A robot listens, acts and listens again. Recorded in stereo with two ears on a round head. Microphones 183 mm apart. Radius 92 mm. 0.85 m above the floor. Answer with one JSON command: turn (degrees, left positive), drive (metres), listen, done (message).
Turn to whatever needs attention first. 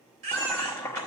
{"turn": -40}
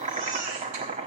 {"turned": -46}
{"listen": true}
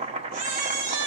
{"turn": -95}
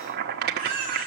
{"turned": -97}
{"done": "Found it: a baby crying, straight ahead."}